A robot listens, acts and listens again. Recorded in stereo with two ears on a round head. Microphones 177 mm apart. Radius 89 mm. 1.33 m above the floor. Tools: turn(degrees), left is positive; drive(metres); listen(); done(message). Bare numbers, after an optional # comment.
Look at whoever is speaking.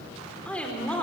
turn(30)
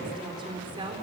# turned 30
# So it is at 25° right.
turn(-25)
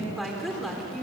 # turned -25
done("Facing the woman speaking, over 4 m away.")